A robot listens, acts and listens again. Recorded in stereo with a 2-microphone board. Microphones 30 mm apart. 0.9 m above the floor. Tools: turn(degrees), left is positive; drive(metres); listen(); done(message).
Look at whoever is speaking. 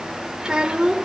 turn(degrees=-25)
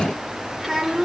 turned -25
done("Found it: a child speaking, straight ahead, 2 to 4 m away.")